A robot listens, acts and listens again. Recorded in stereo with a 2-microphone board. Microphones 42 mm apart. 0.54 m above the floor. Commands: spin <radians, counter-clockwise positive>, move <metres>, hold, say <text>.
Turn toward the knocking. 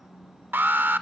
hold
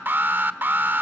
hold
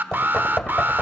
spin 0.26
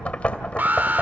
spin 2.62
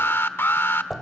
say Found it: knocking, straight ahead.